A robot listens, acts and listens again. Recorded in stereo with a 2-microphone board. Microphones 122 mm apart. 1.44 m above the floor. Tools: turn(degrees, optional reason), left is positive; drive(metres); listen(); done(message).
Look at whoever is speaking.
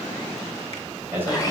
turn(degrees=-15, reason="The man speaking: about 15° right or 165° right.")
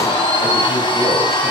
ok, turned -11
listen()
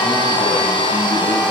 listen()
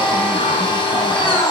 done("I heard a man speaking, but can't make it out now. It was about 5° right or 150° right.")